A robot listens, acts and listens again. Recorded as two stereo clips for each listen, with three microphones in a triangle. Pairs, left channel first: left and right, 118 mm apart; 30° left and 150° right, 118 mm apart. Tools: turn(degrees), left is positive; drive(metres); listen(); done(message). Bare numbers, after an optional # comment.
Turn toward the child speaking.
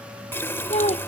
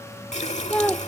# The child speaking: 110° left.
turn(110)
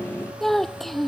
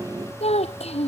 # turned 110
done("Found it: a child speaking, straight ahead.")